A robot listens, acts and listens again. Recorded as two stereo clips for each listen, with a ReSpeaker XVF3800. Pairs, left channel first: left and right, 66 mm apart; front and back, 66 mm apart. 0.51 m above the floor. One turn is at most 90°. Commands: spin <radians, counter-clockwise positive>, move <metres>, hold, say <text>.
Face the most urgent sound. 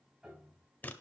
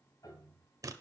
hold
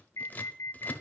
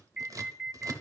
spin 1.57
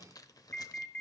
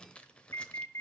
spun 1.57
spin 0.52
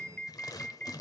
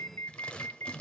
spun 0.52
spin 0.52
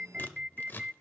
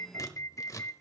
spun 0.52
spin -0.26
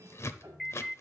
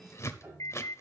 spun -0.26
say Found it: an alarm, straight ahead.